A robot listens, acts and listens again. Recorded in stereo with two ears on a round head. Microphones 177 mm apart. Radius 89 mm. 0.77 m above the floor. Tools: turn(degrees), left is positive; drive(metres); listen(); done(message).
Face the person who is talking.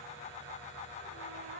listen()
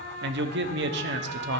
turn(degrees=-60)
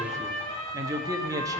turn(degrees=-20)
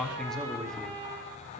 done("Found it: a man speaking, straight ahead.")